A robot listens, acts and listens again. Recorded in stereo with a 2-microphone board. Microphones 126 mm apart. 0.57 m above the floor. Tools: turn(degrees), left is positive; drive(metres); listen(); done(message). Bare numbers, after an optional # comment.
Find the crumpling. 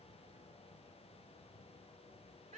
listen()
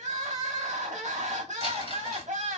# The crumpling: about 55° right or 125° right.
turn(-55)
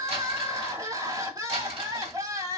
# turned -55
# So it is at 60° right.
turn(-60)
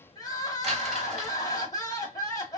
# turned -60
listen()
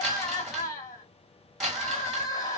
done("Found it: crumpling, straight ahead, 1 to 2 m away.")